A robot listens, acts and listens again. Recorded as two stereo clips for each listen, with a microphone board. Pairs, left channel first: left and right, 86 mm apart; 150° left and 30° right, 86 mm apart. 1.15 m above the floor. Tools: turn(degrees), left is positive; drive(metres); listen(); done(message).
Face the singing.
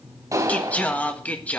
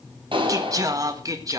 turn(degrees=15)
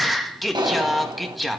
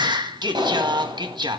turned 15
done("Facing the singing.")